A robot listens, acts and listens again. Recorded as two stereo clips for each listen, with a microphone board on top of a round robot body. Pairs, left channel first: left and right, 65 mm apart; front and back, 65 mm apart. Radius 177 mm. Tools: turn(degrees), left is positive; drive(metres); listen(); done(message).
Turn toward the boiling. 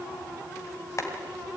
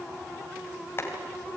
turn(degrees=50)
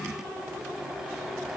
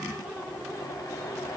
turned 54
done("Facing the boiling.")